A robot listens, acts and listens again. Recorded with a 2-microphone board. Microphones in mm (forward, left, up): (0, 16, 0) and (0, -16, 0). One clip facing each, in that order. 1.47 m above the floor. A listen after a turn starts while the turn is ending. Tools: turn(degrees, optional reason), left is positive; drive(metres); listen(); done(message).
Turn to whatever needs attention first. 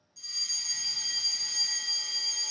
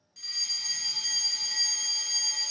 turn(degrees=-55, reason="The fire alarm: about 55° right or 125° right.")
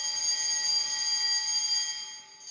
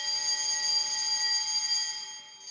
turn(degrees=-15, reason="So it is at 15° right.")
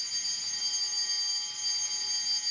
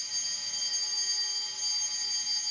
done("Facing the fire alarm.")